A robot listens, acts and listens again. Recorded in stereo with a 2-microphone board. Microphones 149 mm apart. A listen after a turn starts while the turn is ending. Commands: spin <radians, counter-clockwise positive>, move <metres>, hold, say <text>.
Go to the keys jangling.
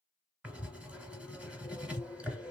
hold
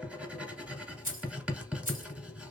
spin -1.57
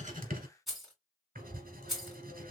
move 1.0
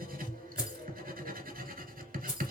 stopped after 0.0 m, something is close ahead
spin -0.17
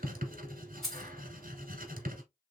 say Blocked. The keys jangling is further on, straight ahead.